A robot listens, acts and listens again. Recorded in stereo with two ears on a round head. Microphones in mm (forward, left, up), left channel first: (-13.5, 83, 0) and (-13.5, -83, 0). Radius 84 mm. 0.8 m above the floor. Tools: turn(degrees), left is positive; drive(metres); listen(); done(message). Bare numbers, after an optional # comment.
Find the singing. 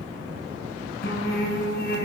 # The singing: about 55° left or 125° left.
turn(55)
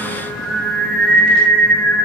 # So it is at 10° left.
turn(10)
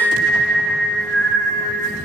# The singing is now 10° left.
turn(10)
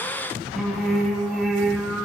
done("Found it: singing, straight ahead.")